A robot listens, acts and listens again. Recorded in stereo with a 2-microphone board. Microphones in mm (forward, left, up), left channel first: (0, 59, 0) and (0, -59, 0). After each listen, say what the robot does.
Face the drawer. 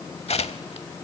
Keep listening.
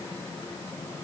Keep listening.
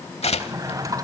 Turn 30° right.
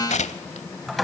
Found it: a drawer, straight ahead, 1 to 2 m away.